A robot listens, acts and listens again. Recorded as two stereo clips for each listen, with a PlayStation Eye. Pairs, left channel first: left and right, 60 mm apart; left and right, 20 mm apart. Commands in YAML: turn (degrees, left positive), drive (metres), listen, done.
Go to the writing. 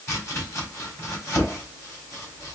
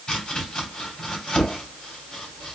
listen: true
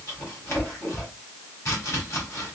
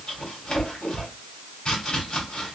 listen: true
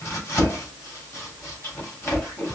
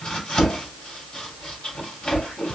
done: "I can't make out writing, only chopping."